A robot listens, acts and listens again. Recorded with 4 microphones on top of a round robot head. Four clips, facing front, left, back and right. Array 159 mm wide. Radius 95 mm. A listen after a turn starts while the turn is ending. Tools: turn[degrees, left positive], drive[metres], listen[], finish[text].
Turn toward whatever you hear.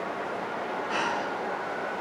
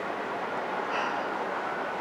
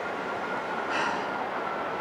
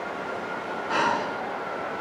Thought: The breathing: 85° right.
Action: turn[-85]
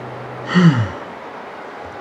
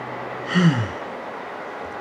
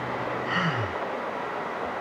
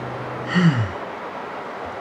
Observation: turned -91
Action: finish[Found it: breathing, straight ahead.]